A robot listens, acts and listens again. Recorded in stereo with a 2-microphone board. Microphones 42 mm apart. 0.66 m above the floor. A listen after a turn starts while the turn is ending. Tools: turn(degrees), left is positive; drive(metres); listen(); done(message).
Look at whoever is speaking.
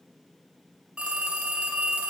listen()
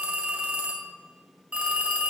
listen()
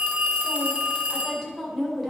turn(degrees=30)
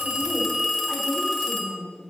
turn(degrees=-30)
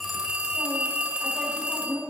done("Facing the woman speaking.")